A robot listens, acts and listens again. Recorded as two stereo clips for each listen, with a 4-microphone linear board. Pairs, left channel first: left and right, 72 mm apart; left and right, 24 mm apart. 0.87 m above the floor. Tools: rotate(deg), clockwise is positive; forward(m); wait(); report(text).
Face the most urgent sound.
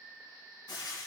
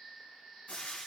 wait()
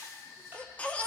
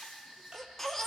rotate(-20)
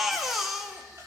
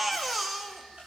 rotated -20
report("Found it: a baby crying, straight ahead.")